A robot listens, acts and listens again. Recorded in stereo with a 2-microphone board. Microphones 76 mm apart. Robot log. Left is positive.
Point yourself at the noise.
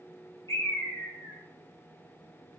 note: The bird: about 45° left or 135° left.
cmd yaw +45
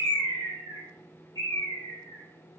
note: So it is at 85° left.
cmd yaw +85
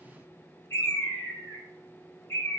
note: The bird is now 35° left.
cmd yaw +35
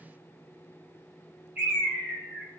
note: The bird is now 20° right.
cmd yaw -20
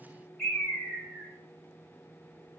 end: Facing the bird, 2 to 4 m away.